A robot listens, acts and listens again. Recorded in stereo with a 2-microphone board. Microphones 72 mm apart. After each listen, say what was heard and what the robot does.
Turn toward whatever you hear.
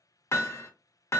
The hammering: about 40° left or 140° left. Turn 40° left.
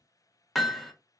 Facing the hammering.